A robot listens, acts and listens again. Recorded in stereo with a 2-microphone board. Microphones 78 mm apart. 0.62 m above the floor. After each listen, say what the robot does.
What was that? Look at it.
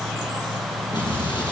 Turn 90° left.
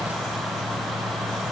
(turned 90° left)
I heard an explosion from this way, but can't make it out now.